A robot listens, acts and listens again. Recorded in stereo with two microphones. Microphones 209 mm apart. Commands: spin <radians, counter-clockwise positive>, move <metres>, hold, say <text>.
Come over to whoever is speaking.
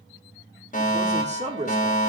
spin -0.61
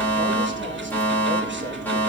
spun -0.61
hold
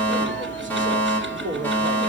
spin -1.92
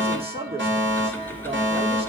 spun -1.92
spin -0.52
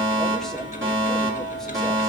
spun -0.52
hold
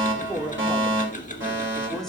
move 1.0
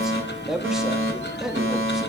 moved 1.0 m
move 1.0
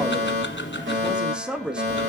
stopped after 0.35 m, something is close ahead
say Arrived at the man speaking, straight ahead.